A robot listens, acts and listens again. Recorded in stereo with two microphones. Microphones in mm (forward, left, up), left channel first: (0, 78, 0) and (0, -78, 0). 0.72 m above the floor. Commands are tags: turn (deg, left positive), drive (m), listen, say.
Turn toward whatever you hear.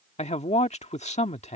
<turn deg="45"/>
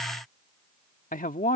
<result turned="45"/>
<turn deg="80"/>
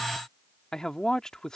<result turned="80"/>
<say>Facing the man speaking.</say>